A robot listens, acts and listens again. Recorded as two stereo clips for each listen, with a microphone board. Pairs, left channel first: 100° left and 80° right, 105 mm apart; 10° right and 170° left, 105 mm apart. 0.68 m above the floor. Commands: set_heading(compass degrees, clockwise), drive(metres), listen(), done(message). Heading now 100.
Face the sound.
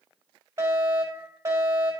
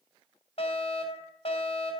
set_heading(120)
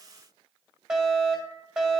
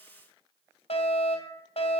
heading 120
done("Facing the fire alarm.")